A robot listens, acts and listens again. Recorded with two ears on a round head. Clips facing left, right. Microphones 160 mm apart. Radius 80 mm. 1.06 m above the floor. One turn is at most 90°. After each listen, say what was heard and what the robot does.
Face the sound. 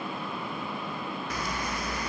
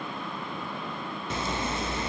The zipper: about 25° right or 155° right. Turn 25° right.
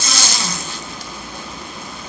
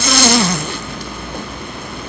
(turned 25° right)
So it is at 130° right. Turn 90° right.
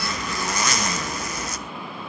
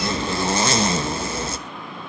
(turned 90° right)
The zipper is now 25° right. Turn 25° right.
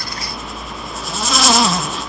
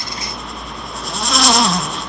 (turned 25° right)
Facing the zipper, under 1 m away.